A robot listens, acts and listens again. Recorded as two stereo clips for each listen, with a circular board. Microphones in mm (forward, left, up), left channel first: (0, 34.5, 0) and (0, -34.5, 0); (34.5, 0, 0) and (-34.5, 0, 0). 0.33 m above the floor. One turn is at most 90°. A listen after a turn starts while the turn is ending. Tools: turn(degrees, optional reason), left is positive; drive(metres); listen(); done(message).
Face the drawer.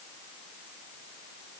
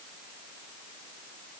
listen()
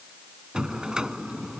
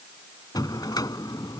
turn(degrees=-10, reason="The drawer: 10° right.")
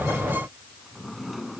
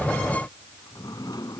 done("Facing the drawer.")